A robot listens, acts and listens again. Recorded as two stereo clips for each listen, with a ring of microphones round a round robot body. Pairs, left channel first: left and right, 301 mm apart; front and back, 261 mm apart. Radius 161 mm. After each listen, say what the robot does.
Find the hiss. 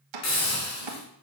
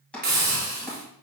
Turn 125° left.
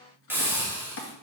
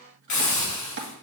Facing the hiss.